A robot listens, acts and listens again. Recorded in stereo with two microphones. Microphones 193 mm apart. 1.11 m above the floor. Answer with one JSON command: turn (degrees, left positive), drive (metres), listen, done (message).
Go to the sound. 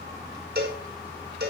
{"turn": -60}
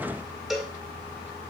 {"drive": 1.0}
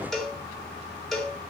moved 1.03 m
{"drive": 1.0}
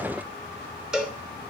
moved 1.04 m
{"drive": 1.0}
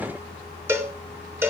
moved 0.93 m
{"turn": -15}
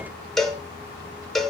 {"drive": 1.0}
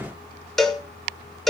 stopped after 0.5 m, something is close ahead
{"done": "I am next to the cowbell."}